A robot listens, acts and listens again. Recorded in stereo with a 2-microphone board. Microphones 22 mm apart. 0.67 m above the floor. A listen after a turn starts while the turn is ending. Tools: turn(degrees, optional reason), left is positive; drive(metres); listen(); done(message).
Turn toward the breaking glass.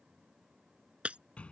turn(degrees=-70, reason="The breaking glass: about 70° right or 110° right.")
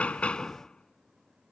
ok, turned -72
listen()
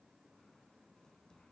done("I heard breaking glass, but can't make it out now. It was about straight ahead or 35° right.")